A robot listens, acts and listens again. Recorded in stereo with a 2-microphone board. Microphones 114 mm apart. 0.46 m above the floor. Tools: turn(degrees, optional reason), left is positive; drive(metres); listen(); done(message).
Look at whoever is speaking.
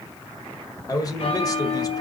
turn(degrees=35, reason="The man speaking: about 35° left or 145° left.")
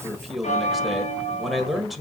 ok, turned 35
done("Facing the man speaking.")